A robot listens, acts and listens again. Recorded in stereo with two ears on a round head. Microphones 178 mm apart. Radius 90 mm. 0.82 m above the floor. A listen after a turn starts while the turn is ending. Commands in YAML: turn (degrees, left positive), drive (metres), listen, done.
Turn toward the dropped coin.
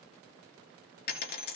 turn: 55
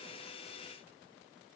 listen: true
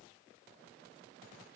done: "I heard a dropped coin, but can't make it out now. It was about straight ahead or 70° left."